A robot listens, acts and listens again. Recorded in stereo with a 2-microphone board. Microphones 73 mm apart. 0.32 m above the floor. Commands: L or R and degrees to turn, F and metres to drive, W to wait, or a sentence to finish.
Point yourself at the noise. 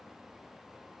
W
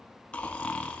L15
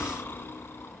L150
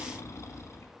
L45
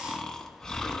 L10
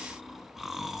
Facing the snoring, 1 to 2 m away.